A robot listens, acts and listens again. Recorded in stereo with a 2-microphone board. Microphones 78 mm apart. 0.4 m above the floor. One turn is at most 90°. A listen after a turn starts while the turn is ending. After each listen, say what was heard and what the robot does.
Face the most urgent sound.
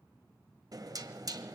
Keep listening.
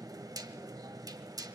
Keep listening.
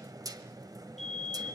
Turn 30° left.
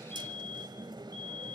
So it is at 150° left. Turn 90° left.
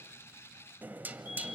Nothing new. It was at 60° left. Turn 60° left.
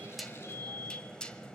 The fire alarm is now 45° left. Turn 45° left.
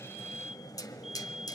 Found it: a fire alarm, straight ahead, 2 to 4 m away.